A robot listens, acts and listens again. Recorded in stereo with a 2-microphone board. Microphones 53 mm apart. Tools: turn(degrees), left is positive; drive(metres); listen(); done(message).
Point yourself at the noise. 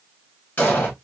turn(degrees=35)
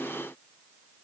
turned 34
listen()
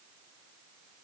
done("I heard an explosion, but can't make it out now. It was about straight ahead or 115° left.")